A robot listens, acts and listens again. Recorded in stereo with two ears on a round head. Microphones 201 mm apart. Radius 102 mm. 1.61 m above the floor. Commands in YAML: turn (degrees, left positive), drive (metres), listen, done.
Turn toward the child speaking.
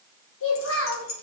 turn: 65
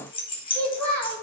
turn: 10
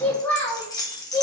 turn: 15
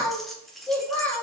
turn: 10
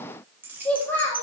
turn: 10
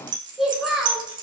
done: "Facing the child speaking, 2 to 4 m away."